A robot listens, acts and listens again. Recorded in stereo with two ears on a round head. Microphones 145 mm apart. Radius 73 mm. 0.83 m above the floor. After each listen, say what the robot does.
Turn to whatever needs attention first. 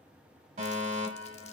Turn 40° right.
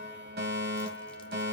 Turn 95° right.
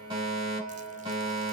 Turn 35° right.
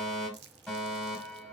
Found it: a fire alarm, straight ahead.